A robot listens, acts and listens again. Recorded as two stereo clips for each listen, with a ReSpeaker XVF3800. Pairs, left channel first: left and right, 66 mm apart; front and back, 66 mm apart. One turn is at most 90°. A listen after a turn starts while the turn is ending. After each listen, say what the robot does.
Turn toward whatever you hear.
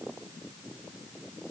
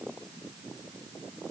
Keep listening.
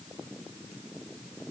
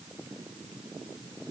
Keep listening.
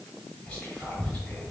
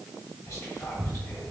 Turn 20° left.
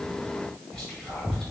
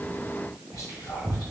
Turn 10° left.
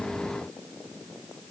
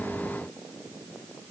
Keep listening.
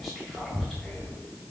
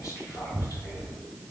Found it: whispering, straight ahead.